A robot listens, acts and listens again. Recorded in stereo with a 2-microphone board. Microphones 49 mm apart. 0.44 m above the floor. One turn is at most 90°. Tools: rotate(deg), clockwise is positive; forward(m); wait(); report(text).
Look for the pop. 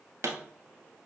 rotate(70)
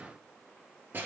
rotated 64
wait()
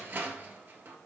report("I heard a pop, but can't make it out now. It was about 5° right or 45° right.")